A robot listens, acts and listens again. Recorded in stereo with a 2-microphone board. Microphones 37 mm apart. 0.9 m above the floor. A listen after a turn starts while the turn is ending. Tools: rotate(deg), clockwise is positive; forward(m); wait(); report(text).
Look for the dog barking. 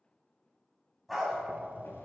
rotate(-30)
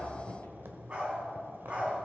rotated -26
rotate(35)
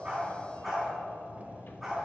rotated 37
report("Found it: a dog barking, straight ahead.")